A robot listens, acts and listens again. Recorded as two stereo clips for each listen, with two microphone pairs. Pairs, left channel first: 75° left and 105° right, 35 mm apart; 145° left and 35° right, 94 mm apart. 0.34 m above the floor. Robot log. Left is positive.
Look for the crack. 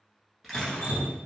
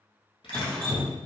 note: The crack: 165° left.
cmd yaw +165
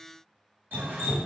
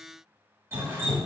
end: I heard a crack from this way, but can't make it out now.